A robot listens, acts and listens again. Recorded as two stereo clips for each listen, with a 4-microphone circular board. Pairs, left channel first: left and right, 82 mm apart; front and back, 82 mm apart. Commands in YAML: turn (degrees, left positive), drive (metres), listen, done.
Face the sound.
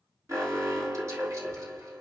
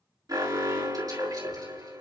turn: -145
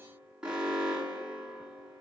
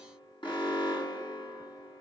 turn: -10
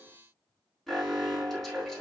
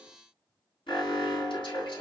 done: "Found it: an alarm, straight ahead, over 4 m away."